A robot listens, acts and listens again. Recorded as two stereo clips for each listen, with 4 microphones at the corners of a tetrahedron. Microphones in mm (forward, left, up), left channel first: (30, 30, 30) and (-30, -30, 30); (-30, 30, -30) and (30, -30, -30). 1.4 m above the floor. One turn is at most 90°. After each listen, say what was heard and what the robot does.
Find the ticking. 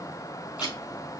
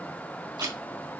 Found it: ticking, straight ahead.